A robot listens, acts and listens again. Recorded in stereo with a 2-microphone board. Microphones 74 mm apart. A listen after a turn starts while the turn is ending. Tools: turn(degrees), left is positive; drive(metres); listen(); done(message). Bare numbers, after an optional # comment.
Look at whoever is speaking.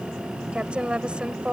turn(-30)
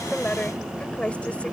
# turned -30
# So it is at 15° left.
turn(15)
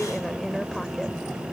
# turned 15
listen()
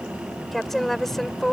done("Found it: a woman speaking, straight ahead.")